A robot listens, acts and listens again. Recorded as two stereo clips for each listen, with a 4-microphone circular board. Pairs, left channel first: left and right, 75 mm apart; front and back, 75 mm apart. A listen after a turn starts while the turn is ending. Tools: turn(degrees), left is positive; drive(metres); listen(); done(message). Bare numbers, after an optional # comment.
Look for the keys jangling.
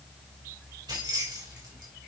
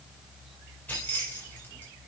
# The keys jangling: 65° right.
turn(-65)
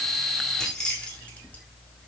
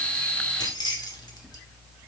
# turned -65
# The keys jangling is now 15° left.
turn(15)
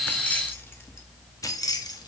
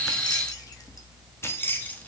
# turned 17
# The keys jangling is now 65° left.
turn(65)
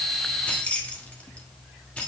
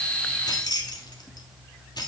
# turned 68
# The keys jangling is now 20° left.
turn(20)
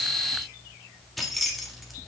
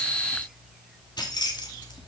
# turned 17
done("Facing the keys jangling.")